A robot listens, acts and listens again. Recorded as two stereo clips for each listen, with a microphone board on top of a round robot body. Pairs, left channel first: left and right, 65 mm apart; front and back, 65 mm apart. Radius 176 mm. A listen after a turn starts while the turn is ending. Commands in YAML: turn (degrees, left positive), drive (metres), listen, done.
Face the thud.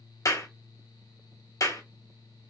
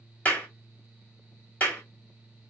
listen: true
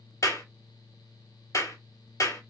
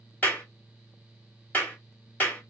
listen: true
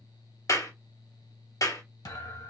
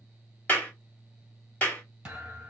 turn: 105
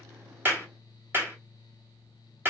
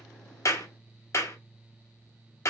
done: "I heard a thud from this way, but can't make it out now."